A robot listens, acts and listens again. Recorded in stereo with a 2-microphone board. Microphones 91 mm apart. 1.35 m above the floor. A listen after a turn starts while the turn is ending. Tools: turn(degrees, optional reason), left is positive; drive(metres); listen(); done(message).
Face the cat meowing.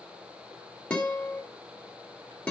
listen()
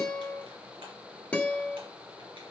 listen()
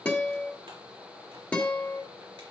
done("I can't make out a cat meowing, only a guitar.")